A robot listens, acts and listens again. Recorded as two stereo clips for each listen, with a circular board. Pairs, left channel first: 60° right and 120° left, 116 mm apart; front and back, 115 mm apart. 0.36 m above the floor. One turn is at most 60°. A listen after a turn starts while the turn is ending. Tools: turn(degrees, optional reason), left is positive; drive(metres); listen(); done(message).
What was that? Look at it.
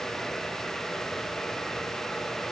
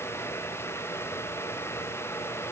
listen()
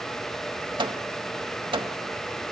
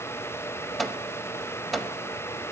turn(degrees=60, reason="The microwave: 90° left.")
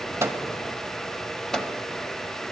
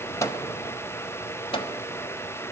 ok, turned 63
turn(degrees=25, reason="The microwave is now 25° left.")
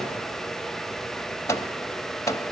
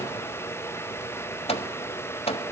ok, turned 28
done("Facing the microwave, 1 to 2 m away.")